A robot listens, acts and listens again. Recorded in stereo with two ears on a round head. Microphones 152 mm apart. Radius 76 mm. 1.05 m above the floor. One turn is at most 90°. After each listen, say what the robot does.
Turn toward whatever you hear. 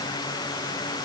Keep listening.
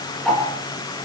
Turn 30° left.
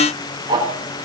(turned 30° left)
Turn 25° right.
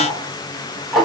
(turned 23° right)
Found it: ticking, straight ahead, over 4 m away.